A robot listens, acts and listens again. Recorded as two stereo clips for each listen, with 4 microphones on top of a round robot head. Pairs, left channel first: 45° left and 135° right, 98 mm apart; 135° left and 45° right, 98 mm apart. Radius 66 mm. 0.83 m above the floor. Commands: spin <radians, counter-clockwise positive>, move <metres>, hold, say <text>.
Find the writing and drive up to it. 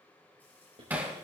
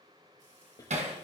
spin -2.97
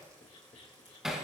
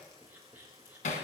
spin 0.44
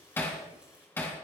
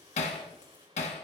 hold
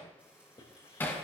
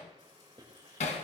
move 1.0
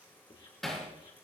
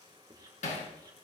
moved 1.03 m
hold
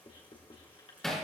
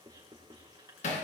move 1.0
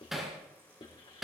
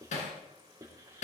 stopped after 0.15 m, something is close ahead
spin 0.17
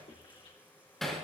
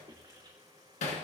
hold
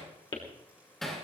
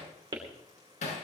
say Something is in my way. I am facing the writing but have not reached it.